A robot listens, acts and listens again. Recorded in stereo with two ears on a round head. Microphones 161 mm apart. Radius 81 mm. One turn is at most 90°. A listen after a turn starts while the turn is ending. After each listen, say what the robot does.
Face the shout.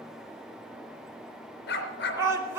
Turn 30° right.
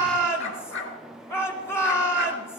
Turn 15° left.
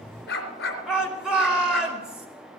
Found it: a shout, straight ahead.